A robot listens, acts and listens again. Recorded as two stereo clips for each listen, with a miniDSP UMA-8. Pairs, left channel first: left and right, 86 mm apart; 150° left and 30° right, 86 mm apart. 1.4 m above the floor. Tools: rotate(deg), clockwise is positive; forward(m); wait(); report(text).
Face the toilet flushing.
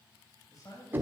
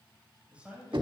wait()
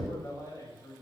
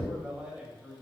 wait()
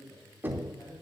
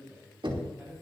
report("I can't make out a toilet flushing to turn to.")